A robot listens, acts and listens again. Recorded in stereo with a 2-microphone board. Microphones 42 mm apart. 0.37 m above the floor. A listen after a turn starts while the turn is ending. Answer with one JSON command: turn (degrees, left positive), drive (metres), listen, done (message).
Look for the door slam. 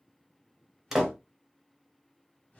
{"turn": -30}
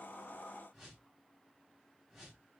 {"listen": true}
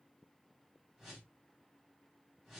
{"done": "I heard a door slam, but can't make it out now. It was about 20° left or 140° right."}